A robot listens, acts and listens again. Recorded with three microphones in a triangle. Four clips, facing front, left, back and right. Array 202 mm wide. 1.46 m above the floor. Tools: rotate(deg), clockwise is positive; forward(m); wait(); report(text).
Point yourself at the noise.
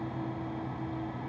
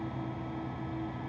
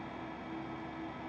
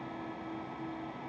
wait()
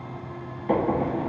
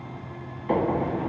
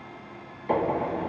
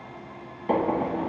rotate(70)
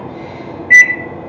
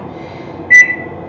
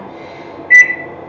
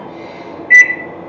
report("Found it: a microwave, straight ahead.")